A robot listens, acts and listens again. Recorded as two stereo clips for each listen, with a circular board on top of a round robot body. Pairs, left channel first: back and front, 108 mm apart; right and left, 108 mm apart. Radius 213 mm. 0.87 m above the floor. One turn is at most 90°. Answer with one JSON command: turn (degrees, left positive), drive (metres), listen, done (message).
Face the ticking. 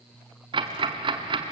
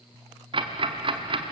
{"turn": 45}
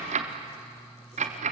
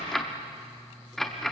{"done": "Facing the ticking, under 1 m away."}